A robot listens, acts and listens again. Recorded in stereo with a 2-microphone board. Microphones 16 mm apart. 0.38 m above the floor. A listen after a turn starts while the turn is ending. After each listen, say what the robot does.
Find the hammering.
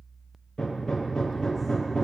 Turn 45° left.
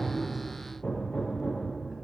Turn 90° left.
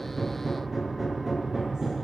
Turn 15° right.
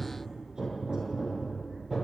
Turn 10° right.
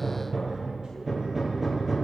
Found it: hammering, straight ahead, over 4 m away.